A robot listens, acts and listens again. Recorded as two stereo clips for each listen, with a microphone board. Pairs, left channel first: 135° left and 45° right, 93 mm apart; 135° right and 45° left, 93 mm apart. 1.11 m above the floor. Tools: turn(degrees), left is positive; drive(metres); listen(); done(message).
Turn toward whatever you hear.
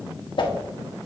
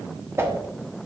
turn(degrees=105)
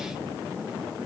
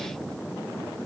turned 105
listen()
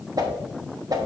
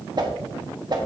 done("Found it: a whoosh, straight ahead.")